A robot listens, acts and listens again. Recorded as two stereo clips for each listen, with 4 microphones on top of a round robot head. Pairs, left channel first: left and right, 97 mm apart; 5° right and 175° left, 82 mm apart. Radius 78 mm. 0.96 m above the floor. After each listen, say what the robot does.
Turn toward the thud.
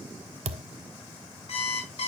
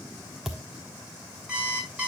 Turn 100° right.
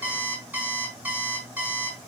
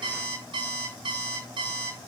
I heard a thud from this way, but can't make it out now.